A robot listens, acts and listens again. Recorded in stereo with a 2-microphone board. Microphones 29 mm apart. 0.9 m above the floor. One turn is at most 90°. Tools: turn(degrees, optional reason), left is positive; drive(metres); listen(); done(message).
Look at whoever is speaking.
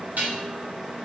listen()
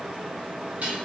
listen()
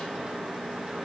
done("I can't make out anyone speaking, only dishes clattering.")